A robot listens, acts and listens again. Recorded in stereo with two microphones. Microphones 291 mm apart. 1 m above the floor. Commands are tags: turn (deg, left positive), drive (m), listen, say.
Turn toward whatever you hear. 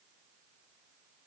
<listen/>
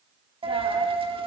<turn deg="-20"/>
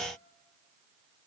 <listen/>
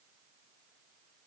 <say>I heard a dropped coin, but can't make it out now. It was about straight ahead or 140° right.</say>